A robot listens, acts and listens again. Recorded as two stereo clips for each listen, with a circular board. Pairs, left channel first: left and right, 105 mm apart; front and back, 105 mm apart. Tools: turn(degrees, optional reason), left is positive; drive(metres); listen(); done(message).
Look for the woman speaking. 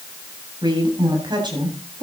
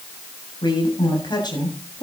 turn(degrees=-45, reason="The woman speaking: 45° right.")
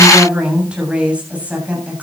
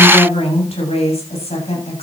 turn(degrees=-15, reason="The woman speaking is now 15° right.")
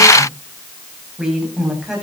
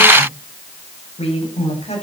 done("Found it: a woman speaking, straight ahead, over 4 m away.")